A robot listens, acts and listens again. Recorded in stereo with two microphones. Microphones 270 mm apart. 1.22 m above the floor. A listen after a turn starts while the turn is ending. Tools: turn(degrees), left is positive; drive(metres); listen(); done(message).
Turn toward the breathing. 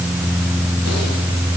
listen()
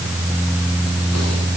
listen()
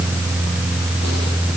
done("I can't make out breathing.")